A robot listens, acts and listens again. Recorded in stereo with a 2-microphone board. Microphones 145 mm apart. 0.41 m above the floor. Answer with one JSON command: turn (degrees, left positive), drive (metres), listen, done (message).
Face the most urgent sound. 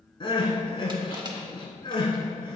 {"turn": 35}
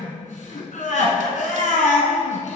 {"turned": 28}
{"turn": 115}
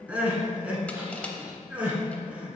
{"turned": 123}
{"turn": -10}
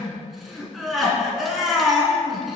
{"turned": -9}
{"done": "Facing the crying."}